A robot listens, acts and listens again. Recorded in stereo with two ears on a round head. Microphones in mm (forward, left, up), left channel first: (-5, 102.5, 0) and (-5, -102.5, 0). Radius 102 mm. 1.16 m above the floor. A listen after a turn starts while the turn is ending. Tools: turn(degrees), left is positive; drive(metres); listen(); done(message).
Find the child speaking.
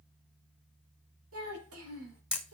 turn(degrees=-70)
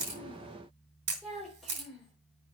done("Found it: a child speaking, straight ahead, 2 to 4 m away.")